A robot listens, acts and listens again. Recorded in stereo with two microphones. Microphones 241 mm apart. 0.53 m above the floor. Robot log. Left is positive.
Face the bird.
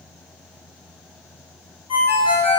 cmd idle
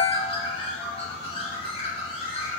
note: The bird: about 20° left or 160° left.
cmd yaw +20
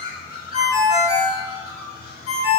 note: So it is at 140° left.
cmd yaw +140
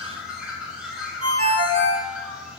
end: Found it: a bird, straight ahead, under 1 m away.